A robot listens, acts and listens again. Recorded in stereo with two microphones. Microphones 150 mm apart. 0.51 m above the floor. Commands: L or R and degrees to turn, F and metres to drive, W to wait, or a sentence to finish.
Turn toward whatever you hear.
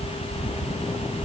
W
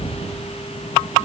W
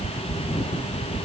I can't make out anything to turn to.